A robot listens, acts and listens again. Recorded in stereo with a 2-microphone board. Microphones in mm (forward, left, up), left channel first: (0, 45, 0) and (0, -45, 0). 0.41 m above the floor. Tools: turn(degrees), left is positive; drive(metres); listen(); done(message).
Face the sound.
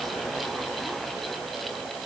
listen()
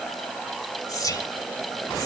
turn(degrees=40)
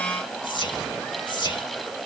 turn(degrees=85)
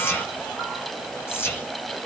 turn(degrees=30)
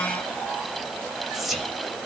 done("Facing the whispering.")